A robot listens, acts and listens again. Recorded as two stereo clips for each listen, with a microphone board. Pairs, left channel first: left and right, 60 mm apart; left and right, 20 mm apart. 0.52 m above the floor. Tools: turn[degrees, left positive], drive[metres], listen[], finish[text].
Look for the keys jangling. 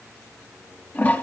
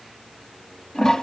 Action: listen[]
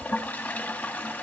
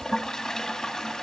Action: listen[]
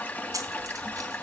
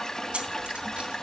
Action: turn[-90]
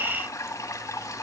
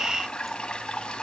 Action: listen[]
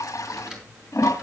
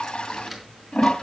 Action: finish[Facing the keys jangling.]